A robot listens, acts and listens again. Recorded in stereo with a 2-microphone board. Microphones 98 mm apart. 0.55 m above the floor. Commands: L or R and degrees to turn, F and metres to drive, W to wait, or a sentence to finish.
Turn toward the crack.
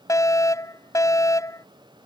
W
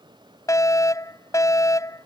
W
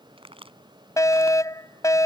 R70
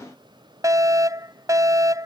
W
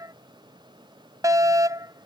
I heard a crack, but can't make it out now. It was about straight ahead or 40° right.